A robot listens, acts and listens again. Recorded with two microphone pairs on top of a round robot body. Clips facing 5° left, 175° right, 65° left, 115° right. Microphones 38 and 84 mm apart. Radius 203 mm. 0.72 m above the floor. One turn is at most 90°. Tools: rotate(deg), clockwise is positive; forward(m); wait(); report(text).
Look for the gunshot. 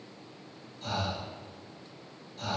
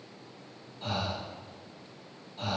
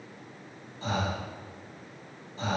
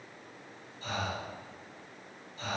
wait()
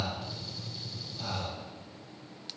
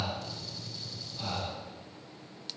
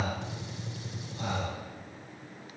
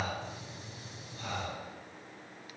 rotate(-80)
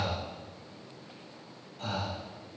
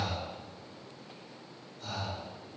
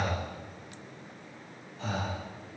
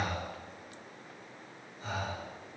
report("Facing where the gunshot came from. I can't hear it now.")